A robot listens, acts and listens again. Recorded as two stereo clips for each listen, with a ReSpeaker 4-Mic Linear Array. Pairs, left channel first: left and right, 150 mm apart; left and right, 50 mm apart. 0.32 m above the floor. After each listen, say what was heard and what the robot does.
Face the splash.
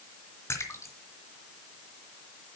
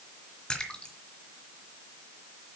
The splash: about 15° left or 165° left. Turn 15° left.
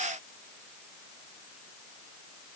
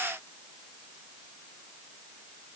Keep listening.
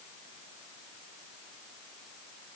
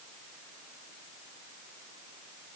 I heard a splash, but can't make it out now. It was about straight ahead or 150° left.